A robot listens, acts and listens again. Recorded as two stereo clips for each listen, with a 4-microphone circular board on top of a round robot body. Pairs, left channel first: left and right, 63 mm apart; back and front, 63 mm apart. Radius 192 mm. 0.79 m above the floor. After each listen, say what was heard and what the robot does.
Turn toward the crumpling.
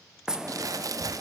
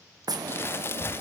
The crumpling: 125° right. Turn 125° right.
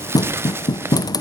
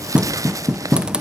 The crumpling is now 35° right. Turn 35° right.
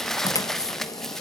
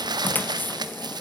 Found it: crumpling, straight ahead, under 1 m away.